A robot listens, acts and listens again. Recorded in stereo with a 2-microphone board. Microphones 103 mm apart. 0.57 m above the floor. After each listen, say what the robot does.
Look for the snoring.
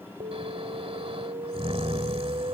Turn 70° right.
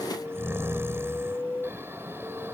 Turn 25° right.
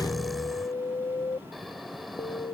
Found it: snoring, straight ahead.